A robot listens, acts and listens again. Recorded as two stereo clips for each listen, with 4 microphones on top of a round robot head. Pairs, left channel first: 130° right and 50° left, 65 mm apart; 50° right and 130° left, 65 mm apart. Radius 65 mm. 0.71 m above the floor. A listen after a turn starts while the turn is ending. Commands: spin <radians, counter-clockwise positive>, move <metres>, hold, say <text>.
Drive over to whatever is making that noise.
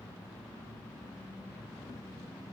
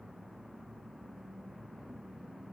hold
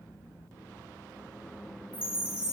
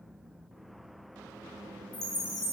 spin -0.44
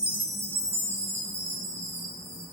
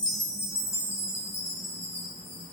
move 1.0
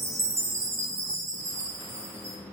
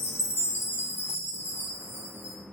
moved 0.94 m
move 1.0
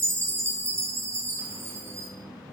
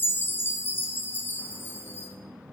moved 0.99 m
move 1.0
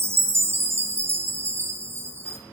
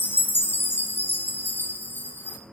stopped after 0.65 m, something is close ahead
say I am next to the chime.